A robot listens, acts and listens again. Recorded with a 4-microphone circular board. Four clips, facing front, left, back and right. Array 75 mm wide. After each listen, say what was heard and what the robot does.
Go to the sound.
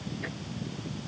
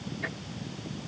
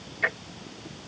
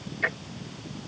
The ticking: 150° right. Turn 150° right.
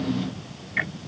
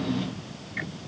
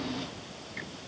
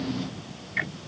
The ticking is now 20° right. Turn 20° right.
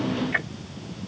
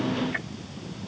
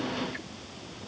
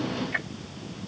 The ticking is now 10° right. Turn 10° right.
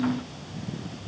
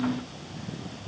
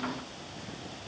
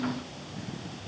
Keep listening.
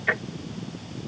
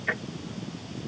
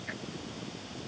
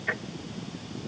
Drive 1.0 m forward.
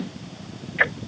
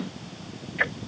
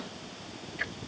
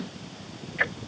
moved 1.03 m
Drive 1.0 m forward.
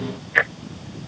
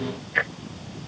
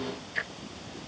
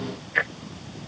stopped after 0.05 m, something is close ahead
I am next to the ticking.